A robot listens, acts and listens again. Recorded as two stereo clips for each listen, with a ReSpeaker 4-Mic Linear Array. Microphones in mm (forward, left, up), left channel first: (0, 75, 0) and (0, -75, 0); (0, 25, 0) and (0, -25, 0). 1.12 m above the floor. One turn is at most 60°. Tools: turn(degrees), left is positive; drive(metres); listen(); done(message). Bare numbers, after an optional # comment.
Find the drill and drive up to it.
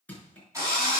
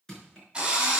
# The drill: about 20° right or 160° right.
turn(-20)
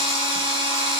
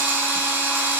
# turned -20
# So it is at 140° right.
turn(-60)
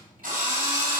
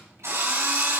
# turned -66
# The drill is now 75° right.
turn(-60)
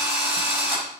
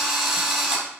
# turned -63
# The drill is now 15° right.
turn(-15)
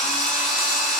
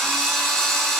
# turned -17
drive(1.0)
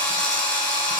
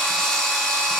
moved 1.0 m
# The drill is now 10° left.
turn(10)
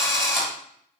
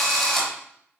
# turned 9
drive(1.0)
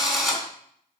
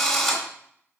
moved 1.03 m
drive(1.0)
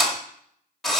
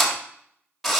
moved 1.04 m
drive(1.0)
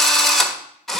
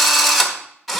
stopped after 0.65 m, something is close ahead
done("I am next to the drill.")